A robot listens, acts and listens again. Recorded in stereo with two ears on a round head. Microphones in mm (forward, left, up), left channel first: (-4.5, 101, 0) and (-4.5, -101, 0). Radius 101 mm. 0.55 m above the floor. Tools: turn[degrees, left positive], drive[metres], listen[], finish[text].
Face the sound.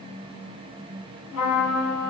Action: turn[90]
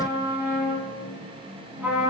Thought: So it is at 10° right.
Action: turn[-10]
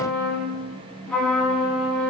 Action: finish[Facing the trumpet, 1 to 2 m away.]